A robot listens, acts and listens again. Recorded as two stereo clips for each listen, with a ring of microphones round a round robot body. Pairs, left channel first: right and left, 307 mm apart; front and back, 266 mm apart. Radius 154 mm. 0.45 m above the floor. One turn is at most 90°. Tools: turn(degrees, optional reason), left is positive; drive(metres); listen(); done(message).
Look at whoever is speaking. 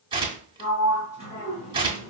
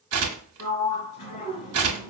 listen()
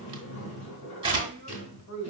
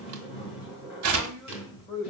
turn(degrees=-70, reason="The woman speaking: 70° right.")
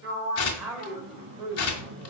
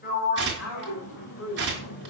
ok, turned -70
done("Facing the woman speaking, 1 to 2 m away.")